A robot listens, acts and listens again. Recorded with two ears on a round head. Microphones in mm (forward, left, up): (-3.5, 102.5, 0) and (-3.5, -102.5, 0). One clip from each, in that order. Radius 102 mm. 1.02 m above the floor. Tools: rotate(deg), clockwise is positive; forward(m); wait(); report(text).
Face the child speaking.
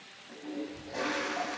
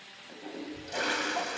rotate(45)
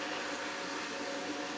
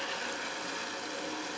wait()
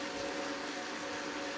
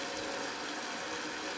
wait()
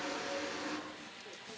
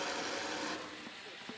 report("I heard a child speaking, but can't make it out now. It was about straight ahead or 90° right.")